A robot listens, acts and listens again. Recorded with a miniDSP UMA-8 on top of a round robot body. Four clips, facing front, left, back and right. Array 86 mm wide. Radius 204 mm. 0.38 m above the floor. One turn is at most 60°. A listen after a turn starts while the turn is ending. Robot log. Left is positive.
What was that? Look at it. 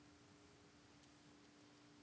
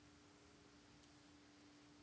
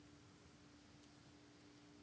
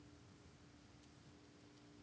cmd idle
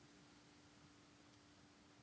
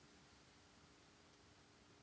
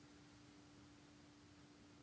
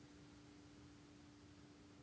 cmd idle
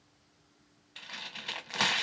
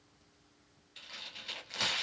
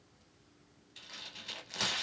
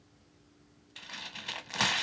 note: The tearing paper: 35° right.
cmd yaw -35
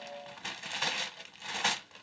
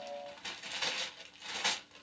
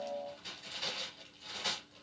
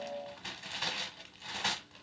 end: Found it: tearing paper, straight ahead, under 1 m away.